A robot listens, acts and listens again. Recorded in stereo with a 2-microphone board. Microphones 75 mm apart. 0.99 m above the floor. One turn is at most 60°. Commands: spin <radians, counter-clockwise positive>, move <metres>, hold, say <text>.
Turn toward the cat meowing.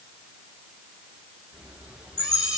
spin -0.52
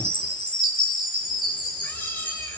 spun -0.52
hold
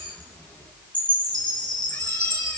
spin 0.52
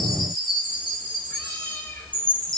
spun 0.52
spin 0.44
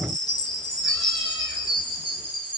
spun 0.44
hold
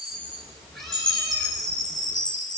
say Facing the cat meowing.